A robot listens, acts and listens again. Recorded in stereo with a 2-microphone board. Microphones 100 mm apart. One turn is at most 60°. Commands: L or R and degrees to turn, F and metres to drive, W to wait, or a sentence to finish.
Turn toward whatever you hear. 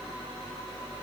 W
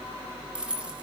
R30
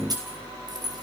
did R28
R60
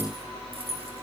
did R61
R60
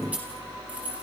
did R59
R15
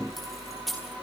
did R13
Found it: keys jangling, straight ahead, over 4 m away.